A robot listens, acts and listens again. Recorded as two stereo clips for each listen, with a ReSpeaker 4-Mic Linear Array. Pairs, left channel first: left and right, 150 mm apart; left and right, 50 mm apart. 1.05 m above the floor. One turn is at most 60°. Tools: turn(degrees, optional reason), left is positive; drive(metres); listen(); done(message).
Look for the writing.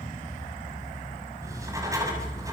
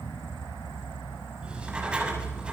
turn(degrees=-20, reason="The writing: about 20° right or 160° right.")
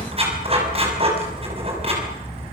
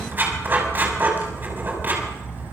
turn(degrees=-60, reason="So it is at 140° right.")
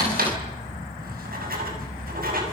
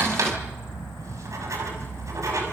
turn(degrees=-60, reason="The writing is now 80° right.")
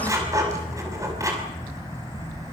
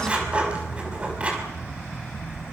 turn(degrees=-20, reason="The writing is now 20° right.")
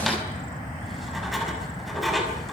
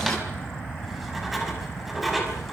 done("Facing the writing.")